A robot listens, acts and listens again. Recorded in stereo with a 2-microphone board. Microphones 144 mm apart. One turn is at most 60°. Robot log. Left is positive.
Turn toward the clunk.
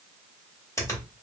cmd idle
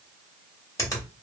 cmd idle
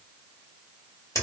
end: I can't make out a clunk to turn to.